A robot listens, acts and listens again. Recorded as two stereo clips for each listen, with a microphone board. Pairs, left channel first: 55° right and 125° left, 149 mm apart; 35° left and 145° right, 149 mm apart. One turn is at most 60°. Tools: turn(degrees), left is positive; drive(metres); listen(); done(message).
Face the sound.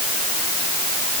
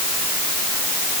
listen()
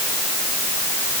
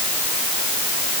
listen()
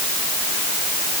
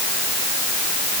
done("I can't make out anything to turn to.")